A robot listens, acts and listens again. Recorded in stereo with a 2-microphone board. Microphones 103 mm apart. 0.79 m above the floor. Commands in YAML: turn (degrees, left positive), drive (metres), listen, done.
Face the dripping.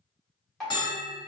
turn: 30
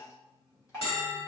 turn: 145
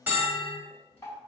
turn: 25
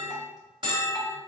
listen: true
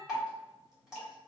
turn: -10
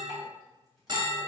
listen: true
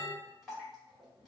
done: "Found it: dripping, straight ahead, 1 to 2 m away."